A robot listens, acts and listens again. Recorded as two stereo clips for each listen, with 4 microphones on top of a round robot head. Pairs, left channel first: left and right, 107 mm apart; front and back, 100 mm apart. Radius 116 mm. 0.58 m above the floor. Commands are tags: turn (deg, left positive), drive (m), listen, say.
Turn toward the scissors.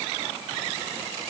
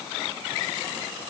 <listen/>
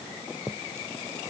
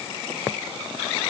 <listen/>
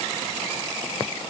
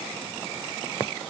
<say>I can't make out scissors to turn to.</say>